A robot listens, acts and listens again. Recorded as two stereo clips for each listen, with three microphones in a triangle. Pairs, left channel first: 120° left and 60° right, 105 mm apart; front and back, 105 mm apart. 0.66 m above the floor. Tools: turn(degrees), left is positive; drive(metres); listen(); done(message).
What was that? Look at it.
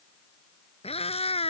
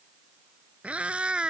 turn(degrees=100)
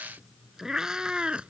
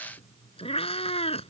turn(degrees=20)
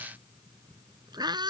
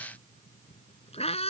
turn(degrees=-15)
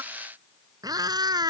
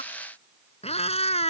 turn(degrees=-10)
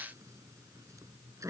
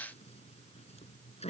done("Found it: a cat meowing, straight ahead.")